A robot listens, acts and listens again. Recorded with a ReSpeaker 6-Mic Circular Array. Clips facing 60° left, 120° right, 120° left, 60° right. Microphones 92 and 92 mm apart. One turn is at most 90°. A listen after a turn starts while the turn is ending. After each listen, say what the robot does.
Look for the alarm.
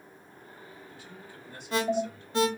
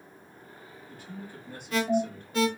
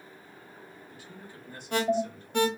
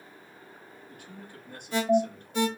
Turn 90° left.
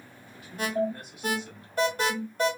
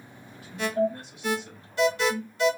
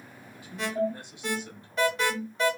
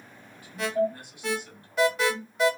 Turn 25° left.
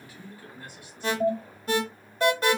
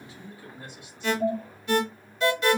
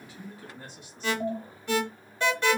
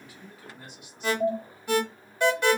Turn 15° left.
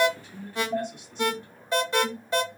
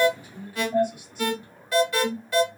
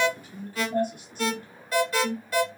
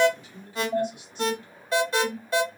Found it: an alarm, straight ahead, under 1 m away.